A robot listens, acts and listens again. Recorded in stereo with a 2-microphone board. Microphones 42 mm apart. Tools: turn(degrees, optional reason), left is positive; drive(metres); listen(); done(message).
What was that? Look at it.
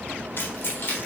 turn(degrees=55, reason="The keys jangling: about 55° left or 125° left.")
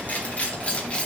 turn(degrees=20, reason="So it is at 20° left.")
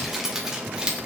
turn(degrees=-25, reason="The keys jangling is now 25° right.")
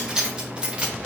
turn(degrees=-25, reason="The keys jangling is now 25° right.")
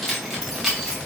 turn(degrees=-10, reason="The keys jangling is now 10° right.")
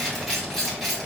done("Found it: keys jangling, straight ahead.")